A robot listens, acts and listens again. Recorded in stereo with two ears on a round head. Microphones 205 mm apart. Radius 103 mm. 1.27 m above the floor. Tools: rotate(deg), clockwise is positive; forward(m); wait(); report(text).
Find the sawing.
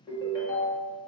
wait()
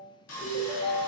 rotate(-70)
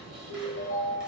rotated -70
report("Facing the sawing, under 1 m away.")